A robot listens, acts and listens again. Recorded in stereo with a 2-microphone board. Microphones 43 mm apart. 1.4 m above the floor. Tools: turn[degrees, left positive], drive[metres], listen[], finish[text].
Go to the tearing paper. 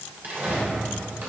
Thought: The tearing paper: about 45° right or 135° right.
Action: turn[-45]
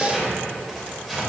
Action: drive[1.0]
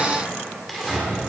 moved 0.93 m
Action: drive[1.0]
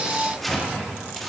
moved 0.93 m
Action: drive[1.0]
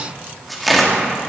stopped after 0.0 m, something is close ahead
Action: finish[Arrived at the tearing paper, straight ahead.]